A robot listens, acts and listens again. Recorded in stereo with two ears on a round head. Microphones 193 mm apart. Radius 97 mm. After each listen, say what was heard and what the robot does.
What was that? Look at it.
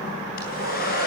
The hair dryer: about 45° left or 135° left. Turn 45° left.
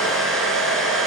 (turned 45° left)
Found it: a hair dryer, straight ahead.